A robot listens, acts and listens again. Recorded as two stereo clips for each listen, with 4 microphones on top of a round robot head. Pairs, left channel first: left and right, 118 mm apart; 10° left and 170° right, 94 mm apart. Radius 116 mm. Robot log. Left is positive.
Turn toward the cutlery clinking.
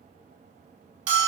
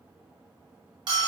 cmd idle
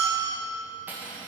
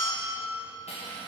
note: The cutlery clinking: 15° right.
cmd yaw -15
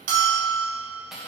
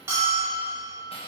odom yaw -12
end: Found it: cutlery clinking, straight ahead.